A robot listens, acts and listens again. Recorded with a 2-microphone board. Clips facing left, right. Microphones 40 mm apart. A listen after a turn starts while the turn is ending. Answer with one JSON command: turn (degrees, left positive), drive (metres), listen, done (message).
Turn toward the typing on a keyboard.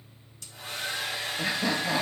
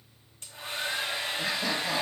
{"listen": true}
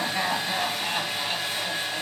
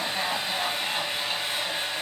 {"listen": true}
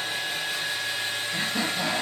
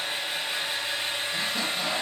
{"done": "I can't make out typing on a keyboard, only a hair dryer and laughter."}